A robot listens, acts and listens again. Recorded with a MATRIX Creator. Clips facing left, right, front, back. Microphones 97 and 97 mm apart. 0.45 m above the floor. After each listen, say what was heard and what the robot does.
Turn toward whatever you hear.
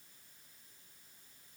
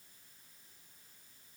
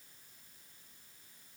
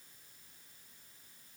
Keep listening.
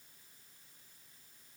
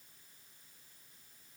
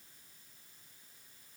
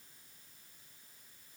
Keep listening.
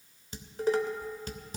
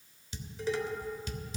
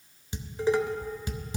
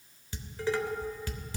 The dishes clattering: 65° left. Turn 65° left.
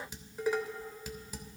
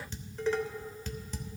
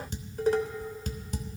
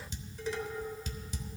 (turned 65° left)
The dishes clattering is now 15° left. Turn 15° left.
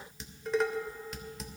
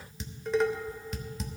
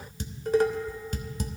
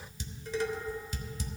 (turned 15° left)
Facing the dishes clattering, 1 to 2 m away.